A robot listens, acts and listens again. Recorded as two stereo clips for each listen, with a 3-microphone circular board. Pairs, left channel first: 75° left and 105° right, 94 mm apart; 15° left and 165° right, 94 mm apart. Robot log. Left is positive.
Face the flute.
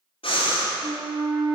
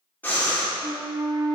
note: The flute: 110° right.
cmd yaw -110
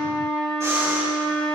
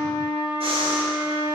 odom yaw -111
end: Facing the flute, 2 to 4 m away.